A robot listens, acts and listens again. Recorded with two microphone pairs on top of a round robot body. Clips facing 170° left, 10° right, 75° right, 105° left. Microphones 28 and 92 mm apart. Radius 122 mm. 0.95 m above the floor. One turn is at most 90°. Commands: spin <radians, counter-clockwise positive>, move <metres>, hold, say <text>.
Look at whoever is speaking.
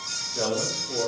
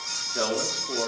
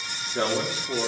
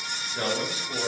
spin -0.26
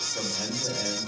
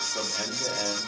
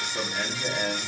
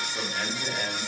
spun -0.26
spin 0.17
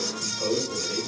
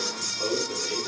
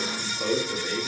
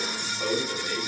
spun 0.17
spin 0.26
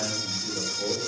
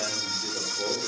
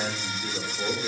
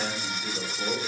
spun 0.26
say Facing the man speaking, 2 to 4 m away.